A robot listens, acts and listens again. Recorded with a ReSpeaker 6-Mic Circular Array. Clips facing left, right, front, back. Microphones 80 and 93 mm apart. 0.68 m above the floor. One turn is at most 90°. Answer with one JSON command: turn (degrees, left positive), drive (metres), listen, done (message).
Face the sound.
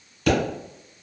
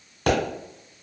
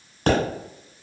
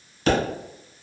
{"turn": -45}
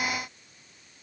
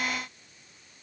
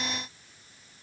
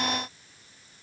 {"done": "Facing where the pop came from. I can't hear it now."}